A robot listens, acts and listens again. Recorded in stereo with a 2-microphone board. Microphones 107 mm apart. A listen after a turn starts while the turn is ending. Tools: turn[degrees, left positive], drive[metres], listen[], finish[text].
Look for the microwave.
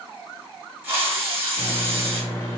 Thought: The microwave: about 35° left or 145° left.
Action: turn[35]
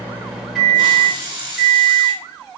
Action: finish[Facing the microwave.]